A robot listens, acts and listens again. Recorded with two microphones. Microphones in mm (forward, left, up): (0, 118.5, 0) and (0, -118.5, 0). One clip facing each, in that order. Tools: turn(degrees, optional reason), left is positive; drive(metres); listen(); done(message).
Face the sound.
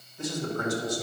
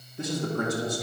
turn(degrees=-60, reason="The man speaking: about 60° right or 120° right.")
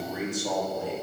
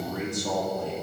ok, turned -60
turn(degrees=10, reason="So it is at 10° left.")
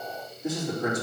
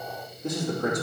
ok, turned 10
turn(degrees=10, reason="The man speaking is now 10° left.")
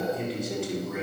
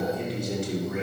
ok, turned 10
done("Facing the man speaking.")